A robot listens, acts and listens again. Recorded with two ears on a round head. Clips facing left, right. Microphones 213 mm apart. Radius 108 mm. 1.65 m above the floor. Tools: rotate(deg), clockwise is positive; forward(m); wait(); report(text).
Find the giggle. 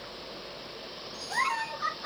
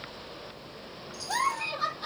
rotate(90)
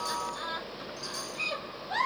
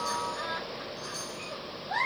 rotate(-10)
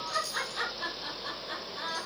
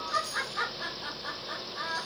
report("Facing the giggle, over 4 m away.")